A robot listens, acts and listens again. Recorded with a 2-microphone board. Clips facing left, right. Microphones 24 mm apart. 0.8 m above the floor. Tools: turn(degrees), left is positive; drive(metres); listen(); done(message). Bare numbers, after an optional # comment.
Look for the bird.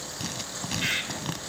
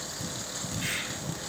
# The bird: about 35° left or 145° left.
turn(35)
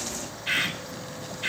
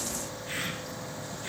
# So it is at 110° left.
turn(110)
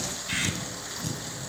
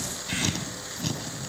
listen()
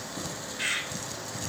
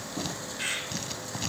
done("Facing the bird.")